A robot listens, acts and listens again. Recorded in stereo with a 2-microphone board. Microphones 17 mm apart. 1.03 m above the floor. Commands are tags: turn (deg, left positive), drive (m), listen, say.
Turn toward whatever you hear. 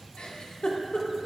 <turn deg="65"/>
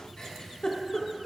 <turn deg="50"/>
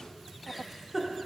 <turn deg="-10"/>
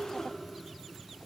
<say>Found it: a giggle, straight ahead, 1 to 2 m away.</say>